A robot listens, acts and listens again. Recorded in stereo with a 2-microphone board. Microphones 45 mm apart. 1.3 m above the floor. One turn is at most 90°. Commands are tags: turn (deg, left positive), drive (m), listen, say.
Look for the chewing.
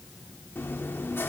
<turn deg="60"/>
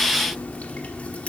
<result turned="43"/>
<turn deg="35"/>
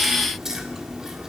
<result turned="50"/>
<turn deg="-15"/>
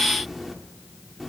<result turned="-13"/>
<say>Found it: chewing, straight ahead, 1 to 2 m away.</say>